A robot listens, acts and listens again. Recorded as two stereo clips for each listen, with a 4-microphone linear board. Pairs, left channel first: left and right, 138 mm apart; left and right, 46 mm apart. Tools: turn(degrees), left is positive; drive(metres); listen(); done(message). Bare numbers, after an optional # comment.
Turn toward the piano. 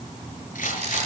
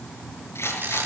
listen()
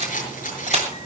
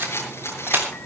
listen()
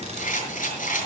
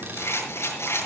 done("I can't make out a piano to turn to.")